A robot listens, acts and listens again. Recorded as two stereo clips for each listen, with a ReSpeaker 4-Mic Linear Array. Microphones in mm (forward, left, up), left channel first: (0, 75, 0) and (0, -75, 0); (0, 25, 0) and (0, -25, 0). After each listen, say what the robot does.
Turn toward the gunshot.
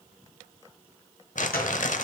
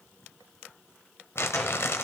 Turn 90° left.
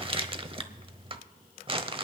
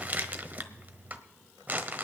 Facing where the gunshot came from. I can't hear it now.